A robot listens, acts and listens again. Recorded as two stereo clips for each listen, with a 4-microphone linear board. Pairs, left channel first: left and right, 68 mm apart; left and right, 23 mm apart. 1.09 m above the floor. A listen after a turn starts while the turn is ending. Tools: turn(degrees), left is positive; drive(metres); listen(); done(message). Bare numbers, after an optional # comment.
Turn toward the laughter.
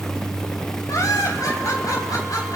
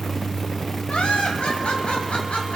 # The laughter: about 60° left or 120° left.
turn(60)
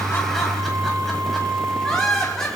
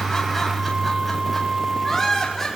# So it is at 10° left.
turn(10)
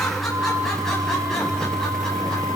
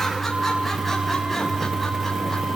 listen()
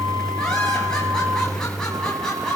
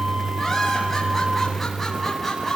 # The laughter is now 10° left.
turn(10)
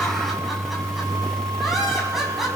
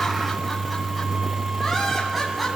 done("Facing the laughter.")